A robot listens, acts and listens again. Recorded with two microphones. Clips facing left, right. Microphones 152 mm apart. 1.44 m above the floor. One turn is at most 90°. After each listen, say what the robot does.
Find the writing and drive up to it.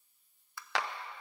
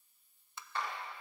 Keep listening.
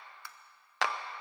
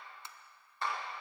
Keep listening.
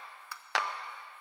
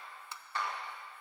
I can't make out writing, only tapping and a clap.